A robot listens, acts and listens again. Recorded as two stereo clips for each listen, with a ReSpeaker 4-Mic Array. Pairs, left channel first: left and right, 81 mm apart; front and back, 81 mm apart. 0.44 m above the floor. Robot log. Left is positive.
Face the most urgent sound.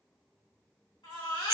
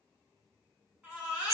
note: The baby crying: 105° left.
cmd yaw +105
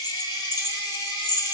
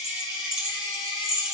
cmd idle
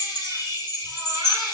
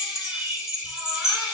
cmd idle
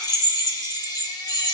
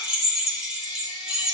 end: Facing where the baby crying came from. I can't hear it now.